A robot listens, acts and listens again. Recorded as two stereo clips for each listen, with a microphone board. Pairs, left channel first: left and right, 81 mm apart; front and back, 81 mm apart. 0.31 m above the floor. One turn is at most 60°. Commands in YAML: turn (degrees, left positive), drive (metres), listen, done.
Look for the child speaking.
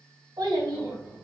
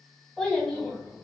turn: -60
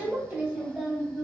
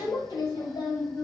done: "Facing the child speaking, 1 to 2 m away."